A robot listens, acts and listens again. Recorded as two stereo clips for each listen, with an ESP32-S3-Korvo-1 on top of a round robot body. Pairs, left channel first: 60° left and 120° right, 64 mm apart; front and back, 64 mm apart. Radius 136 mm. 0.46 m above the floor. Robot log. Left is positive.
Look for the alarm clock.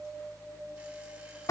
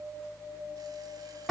cmd idle
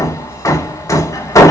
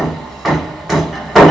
cmd idle
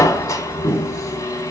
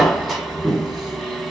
end: I can't make out an alarm clock, only hammering.